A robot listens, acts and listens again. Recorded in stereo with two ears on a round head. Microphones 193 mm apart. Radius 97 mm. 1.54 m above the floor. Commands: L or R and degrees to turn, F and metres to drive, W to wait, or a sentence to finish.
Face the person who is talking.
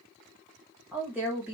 R30
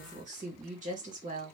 R140
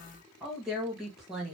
Found it: a woman speaking, straight ahead.